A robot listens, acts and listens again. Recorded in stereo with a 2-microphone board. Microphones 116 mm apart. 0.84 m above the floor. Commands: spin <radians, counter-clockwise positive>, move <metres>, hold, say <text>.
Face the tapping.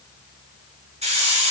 hold
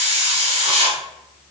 hold
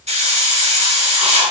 say I can't make out tapping to turn to.